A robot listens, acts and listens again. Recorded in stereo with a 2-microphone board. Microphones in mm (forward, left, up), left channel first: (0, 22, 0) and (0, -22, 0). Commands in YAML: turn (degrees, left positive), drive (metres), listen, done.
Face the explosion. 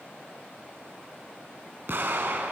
turn: -65
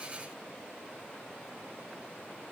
listen: true
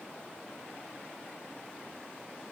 done: "I heard an explosion, but can't make it out now. It was about straight ahead or 50° right."